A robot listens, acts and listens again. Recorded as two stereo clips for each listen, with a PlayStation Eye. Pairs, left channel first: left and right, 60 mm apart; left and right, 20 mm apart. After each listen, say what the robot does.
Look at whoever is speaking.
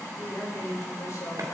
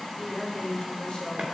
Turn 55° left.
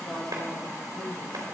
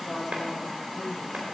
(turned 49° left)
Turn 15° left.
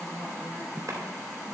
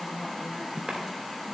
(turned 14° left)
Found it: a woman speaking, straight ahead.